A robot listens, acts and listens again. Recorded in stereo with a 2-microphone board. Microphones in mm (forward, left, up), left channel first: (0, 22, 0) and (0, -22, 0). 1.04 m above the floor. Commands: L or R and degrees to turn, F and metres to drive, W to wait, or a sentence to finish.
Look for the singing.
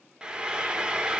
W
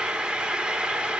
W
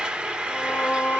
L35
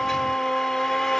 L10
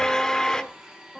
Facing the singing.